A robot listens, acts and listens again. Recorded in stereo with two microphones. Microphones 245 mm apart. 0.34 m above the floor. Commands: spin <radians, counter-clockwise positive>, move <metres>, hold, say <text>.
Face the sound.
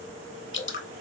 spin 0.87
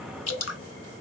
spin 1.40
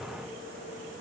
hold
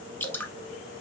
spin 0.17
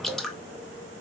say Facing the dripping, under 1 m away.